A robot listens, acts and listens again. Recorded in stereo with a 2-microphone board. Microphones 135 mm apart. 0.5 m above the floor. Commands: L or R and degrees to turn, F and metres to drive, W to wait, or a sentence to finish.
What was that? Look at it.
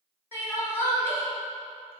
L20
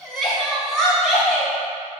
Found it: crying, straight ahead.